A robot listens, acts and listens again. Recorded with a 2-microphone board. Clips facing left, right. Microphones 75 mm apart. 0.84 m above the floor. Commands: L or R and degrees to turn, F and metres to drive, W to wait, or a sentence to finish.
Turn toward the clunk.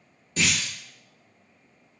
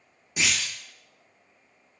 R30
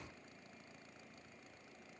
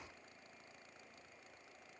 W
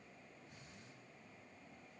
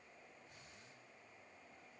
I heard a clunk, but can't make it out now. It was about 15° left or 135° right.